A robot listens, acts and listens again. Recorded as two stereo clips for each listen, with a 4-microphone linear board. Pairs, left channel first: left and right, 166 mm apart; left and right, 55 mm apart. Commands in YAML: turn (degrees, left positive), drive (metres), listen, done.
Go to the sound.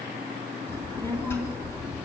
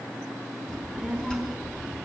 turn: 30
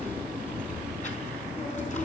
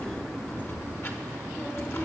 turn: 135
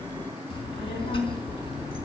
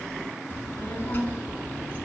turn: 30
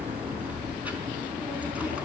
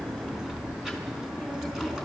turn: -10
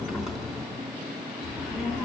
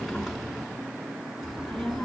drive: 1.0
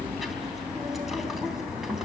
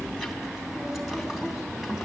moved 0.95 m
drive: 1.0
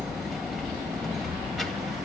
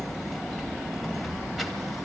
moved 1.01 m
drive: 1.0
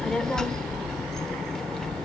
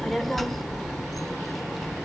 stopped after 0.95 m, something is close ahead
done: "I am next to the child speaking."